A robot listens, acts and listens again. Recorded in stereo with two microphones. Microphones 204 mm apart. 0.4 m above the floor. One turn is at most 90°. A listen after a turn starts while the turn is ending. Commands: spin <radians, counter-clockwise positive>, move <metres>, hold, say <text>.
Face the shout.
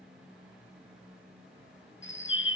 hold
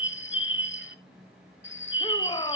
spin 0.44
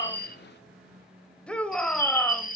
say Facing the shout, 1 to 2 m away.